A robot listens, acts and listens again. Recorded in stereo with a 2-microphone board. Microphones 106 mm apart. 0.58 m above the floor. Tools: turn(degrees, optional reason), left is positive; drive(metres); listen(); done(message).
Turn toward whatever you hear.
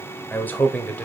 turn(degrees=15, reason="The man speaking: about 15° left or 165° left.")
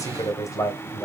turn(degrees=30, reason="The man speaking: about 30° left or 150° left.")
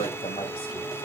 turn(degrees=120, reason="So it is at 120° left.")
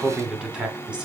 turn(degrees=-10, reason="The man speaking is now 10° right.")
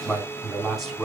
done("Facing the man speaking, over 4 m away.")